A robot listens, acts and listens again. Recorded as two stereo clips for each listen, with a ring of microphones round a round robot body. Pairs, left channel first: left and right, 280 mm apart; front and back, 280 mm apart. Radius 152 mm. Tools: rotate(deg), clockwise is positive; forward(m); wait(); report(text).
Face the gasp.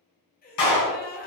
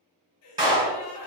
rotate(-30)
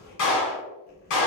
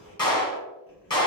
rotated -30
report("I heard a gasp from this way, but can't make it out now.")